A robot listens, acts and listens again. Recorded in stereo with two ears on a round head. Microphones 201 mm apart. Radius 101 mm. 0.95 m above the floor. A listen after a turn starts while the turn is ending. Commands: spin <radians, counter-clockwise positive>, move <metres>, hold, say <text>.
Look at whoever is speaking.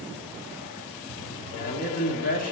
spin 0.61
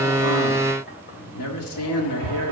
spin 1.92
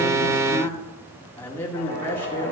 spin 0.17
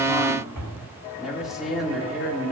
say Facing the man speaking.